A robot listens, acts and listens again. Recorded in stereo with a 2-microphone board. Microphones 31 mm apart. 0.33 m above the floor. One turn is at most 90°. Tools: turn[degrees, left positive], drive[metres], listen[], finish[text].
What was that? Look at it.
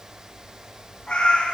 Thought: The cat meowing: about 25° left or 155° left.
Action: turn[25]
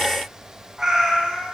Thought: So it is at 25° right.
Action: turn[-25]
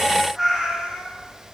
Thought: The cat meowing is now 15° right.
Action: turn[-15]
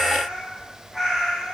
Thought: The cat meowing is now 10° right.
Action: turn[-10]
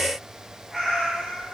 Action: finish[Facing the cat meowing, 2 to 4 m away.]